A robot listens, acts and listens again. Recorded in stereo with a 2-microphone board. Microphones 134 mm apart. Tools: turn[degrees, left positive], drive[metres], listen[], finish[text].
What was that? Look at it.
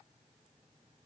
Action: listen[]
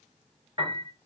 Thought: The piano: about 40° right or 140° right.
Action: turn[-40]
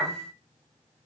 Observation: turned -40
Action: finish[Facing the piano.]